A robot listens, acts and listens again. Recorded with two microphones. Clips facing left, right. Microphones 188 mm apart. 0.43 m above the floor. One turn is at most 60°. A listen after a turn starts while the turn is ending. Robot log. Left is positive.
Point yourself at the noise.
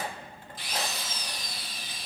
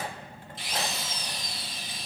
note: The drill: about 25° right or 155° right.
cmd yaw -25
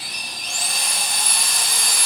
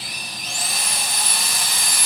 end: Found it: a drill, straight ahead, 1 to 2 m away.